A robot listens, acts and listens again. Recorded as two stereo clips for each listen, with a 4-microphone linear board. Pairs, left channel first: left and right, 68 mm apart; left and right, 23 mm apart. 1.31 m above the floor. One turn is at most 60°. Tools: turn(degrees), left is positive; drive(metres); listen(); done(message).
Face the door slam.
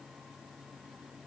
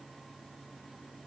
listen()
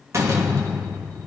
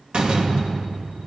turn(degrees=-45)
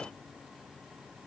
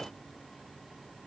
listen()
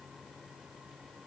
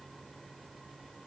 done("I heard a door slam, but can't make it out now. It was about straight ahead or 90° right.")